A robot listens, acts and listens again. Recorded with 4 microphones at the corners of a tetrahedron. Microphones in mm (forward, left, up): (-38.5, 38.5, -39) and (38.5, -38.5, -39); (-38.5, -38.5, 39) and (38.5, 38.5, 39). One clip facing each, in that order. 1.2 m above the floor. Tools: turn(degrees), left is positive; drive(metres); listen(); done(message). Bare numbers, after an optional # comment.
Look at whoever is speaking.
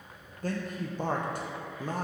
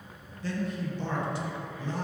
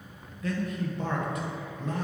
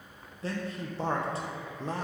# The man speaking: 100° left.
turn(100)
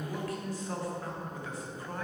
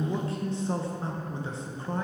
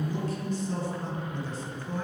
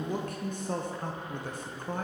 # The man speaking is now 15° left.
turn(15)
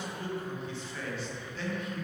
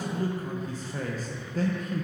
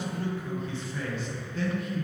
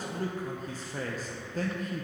done("Facing the man speaking, under 1 m away.")